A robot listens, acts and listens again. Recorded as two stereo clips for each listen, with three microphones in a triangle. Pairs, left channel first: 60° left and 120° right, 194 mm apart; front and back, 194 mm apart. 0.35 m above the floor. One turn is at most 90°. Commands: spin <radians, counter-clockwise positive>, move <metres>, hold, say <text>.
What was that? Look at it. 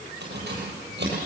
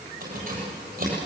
spin -1.57
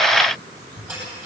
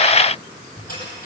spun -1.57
spin -0.70
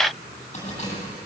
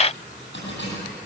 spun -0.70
say Facing the keys jangling.